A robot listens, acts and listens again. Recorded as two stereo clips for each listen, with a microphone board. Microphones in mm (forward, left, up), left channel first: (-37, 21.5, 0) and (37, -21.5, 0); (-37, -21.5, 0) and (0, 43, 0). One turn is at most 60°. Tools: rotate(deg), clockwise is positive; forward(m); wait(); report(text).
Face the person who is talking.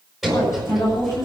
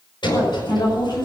rotate(60)
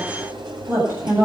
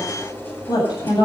rotate(60)
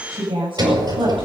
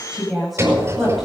rotate(30)
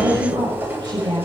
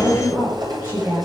report("Facing the woman speaking, over 4 m away.")